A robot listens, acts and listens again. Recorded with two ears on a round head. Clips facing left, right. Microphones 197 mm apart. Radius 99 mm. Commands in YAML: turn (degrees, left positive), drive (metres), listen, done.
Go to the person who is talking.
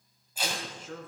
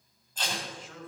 turn: 40
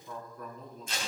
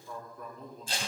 drive: 1.0
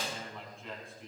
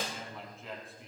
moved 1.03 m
drive: 1.0
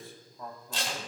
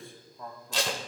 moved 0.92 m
drive: 1.0
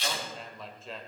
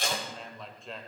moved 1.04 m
drive: 1.0
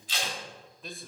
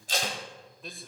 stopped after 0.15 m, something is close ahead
done: "Arrived at the man speaking, straight ahead."